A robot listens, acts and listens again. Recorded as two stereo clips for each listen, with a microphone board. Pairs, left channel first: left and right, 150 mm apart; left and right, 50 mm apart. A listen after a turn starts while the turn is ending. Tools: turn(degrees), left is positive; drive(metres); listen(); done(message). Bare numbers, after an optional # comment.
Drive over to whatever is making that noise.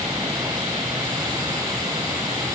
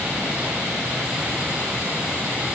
listen()
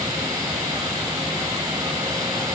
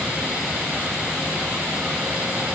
listen()
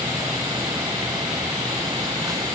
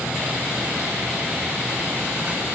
done("I can't make out anything to turn to.")